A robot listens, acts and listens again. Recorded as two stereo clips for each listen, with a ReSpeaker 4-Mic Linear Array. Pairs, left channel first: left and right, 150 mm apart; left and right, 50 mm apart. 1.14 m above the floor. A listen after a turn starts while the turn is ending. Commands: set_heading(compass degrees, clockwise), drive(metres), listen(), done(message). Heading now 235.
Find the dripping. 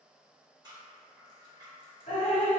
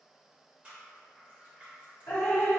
set_heading(175)
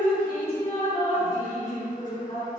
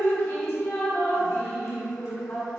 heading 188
set_heading(123)
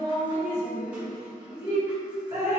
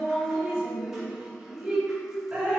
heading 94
set_heading(119)
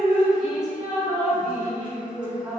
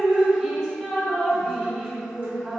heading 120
done("Facing the dripping.")